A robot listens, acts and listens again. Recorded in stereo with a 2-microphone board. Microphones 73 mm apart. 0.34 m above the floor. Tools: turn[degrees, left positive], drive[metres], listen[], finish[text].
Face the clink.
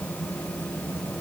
Action: listen[]
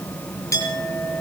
Thought: The clink: about 45° left or 135° left.
Action: turn[45]
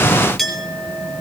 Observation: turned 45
Action: finish[Facing the clink.]